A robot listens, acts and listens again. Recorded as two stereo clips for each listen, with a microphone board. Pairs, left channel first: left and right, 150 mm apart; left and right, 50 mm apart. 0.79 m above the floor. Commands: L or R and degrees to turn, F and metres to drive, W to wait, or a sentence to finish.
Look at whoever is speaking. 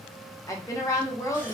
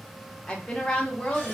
L20
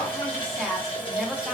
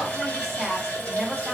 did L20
Facing the woman speaking.